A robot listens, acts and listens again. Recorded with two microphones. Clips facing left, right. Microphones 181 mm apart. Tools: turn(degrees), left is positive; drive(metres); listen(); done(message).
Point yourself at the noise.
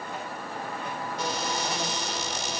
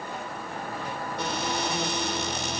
turn(degrees=-70)
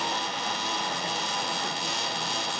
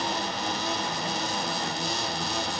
turn(degrees=-40)
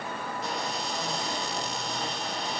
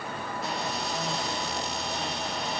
done("Facing the cupboard door, 2 to 4 m away.")